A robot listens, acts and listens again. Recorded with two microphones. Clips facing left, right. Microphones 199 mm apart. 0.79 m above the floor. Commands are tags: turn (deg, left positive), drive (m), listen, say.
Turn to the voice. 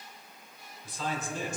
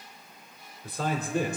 <turn deg="-60"/>
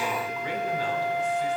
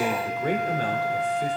<turn deg="-55"/>
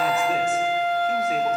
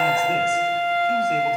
<listen/>
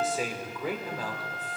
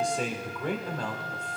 <say>Found it: a man speaking, straight ahead.</say>